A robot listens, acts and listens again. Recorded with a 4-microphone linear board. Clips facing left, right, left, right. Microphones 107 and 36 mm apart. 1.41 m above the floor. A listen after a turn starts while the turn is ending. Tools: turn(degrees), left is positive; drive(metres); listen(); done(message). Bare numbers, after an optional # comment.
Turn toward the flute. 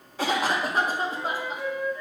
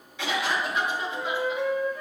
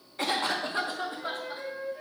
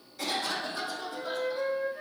# The flute: about 55° right or 125° right.
turn(-55)
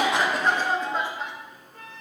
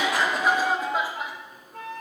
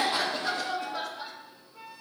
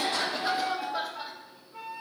# So it is at 70° right.
turn(-70)
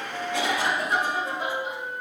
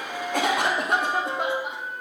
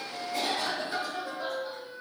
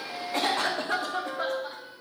done("Found it: a flute, straight ahead.")